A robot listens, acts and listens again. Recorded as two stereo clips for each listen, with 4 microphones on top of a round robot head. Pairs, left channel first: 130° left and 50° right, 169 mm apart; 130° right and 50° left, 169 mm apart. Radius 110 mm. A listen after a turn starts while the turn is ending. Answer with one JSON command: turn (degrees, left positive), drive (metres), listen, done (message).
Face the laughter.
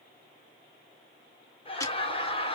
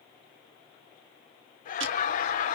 {"turn": -170}
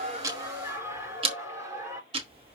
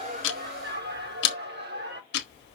{"turn": 25}
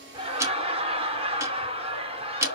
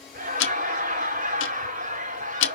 {"turn": 10}
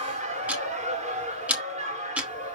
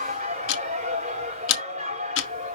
{"done": "Found it: laughter, straight ahead, over 4 m away."}